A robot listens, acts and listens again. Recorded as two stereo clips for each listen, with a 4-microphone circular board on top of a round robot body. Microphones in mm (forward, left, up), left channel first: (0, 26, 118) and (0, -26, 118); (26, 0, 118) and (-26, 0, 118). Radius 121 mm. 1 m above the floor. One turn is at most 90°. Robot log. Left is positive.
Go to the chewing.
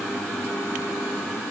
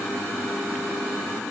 cmd idle
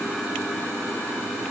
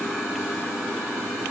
cmd idle
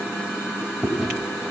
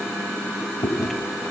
cmd fwd 1.0
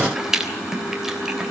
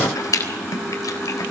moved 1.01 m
note: The chewing is now 10° right.
cmd yaw -10
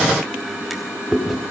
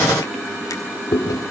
cmd fwd 1.0
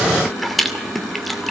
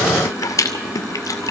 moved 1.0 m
cmd fwd 1.0
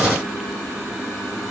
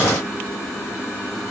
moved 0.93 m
cmd idle
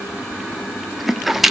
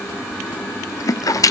cmd fwd 1.0
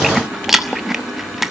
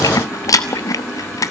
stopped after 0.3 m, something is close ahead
end: I am next to the chewing.